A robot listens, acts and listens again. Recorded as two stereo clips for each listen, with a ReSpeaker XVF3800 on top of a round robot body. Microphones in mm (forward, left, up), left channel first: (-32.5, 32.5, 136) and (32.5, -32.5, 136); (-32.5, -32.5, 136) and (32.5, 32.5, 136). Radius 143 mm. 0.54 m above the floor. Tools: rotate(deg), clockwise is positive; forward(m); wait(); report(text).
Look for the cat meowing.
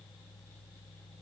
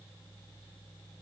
wait()
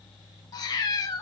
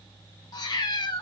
rotate(175)
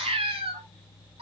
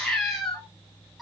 rotate(45)
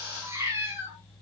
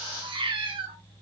rotate(-15)
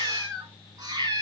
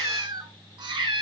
report("Facing the cat meowing, 2 to 4 m away.")